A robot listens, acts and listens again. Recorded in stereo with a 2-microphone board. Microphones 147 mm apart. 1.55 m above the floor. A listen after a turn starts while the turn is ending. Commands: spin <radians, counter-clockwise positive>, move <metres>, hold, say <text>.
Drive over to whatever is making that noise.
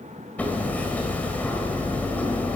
spin 0.52
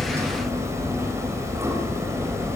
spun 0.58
spin -0.35
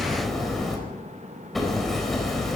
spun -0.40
move 1.0
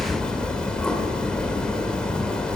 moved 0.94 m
move 1.0
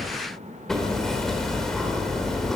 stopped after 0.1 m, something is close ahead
say Blocked. The hammering is further on, straight ahead.